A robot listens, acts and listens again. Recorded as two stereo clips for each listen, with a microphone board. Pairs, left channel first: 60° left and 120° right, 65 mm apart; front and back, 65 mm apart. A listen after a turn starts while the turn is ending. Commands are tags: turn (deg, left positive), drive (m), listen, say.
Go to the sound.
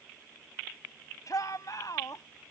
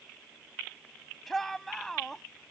<turn deg="85"/>
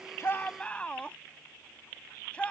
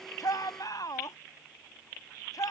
<turn deg="-10"/>
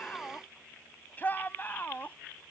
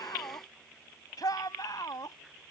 <drive m="1.0"/>
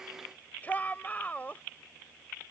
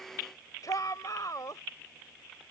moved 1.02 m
<drive m="1.0"/>
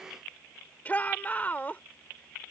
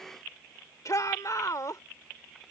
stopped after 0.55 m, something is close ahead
<say>I am next to the shout.</say>